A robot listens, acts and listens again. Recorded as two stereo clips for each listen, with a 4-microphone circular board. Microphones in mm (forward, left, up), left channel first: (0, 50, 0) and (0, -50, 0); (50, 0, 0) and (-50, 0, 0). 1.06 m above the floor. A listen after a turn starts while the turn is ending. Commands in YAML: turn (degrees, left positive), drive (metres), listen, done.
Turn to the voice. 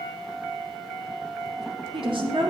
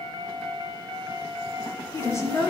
turn: -60
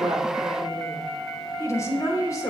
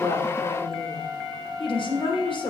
turn: 35
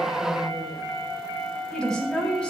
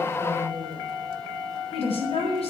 turn: 10
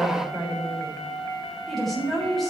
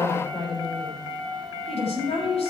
done: "Facing the woman speaking."